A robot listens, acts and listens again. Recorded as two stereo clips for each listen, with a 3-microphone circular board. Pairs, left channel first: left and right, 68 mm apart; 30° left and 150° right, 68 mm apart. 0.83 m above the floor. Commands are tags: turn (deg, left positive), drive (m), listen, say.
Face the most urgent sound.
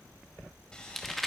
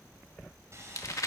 <listen/>
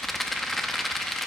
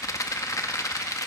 <listen/>
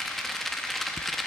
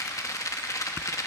<say>I can't make out anything urgent, only a rattle.</say>